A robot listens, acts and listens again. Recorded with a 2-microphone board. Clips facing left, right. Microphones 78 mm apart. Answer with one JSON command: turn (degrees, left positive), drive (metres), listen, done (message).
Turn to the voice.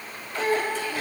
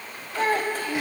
{"turn": -50}
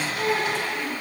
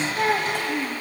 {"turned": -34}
{"turn": -90}
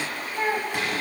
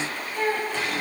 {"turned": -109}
{"turn": 20}
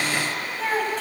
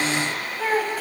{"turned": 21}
{"done": "Facing the child speaking."}